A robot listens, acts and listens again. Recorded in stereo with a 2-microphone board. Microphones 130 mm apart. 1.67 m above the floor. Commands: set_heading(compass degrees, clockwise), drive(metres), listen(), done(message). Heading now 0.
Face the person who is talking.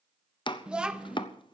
set_heading(30)
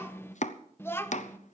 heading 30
set_heading(10)
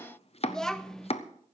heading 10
done("Facing the child speaking, under 1 m away.")